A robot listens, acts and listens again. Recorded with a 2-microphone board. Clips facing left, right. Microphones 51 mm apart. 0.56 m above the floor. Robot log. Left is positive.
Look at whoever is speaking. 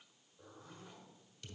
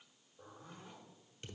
cmd idle
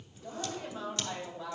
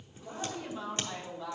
note: The woman speaking: about 45° left or 135° left.
cmd yaw +45
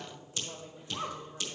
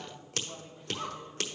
note: So it is at 80° left.
cmd yaw +80
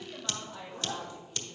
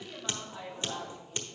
end: Facing the woman speaking.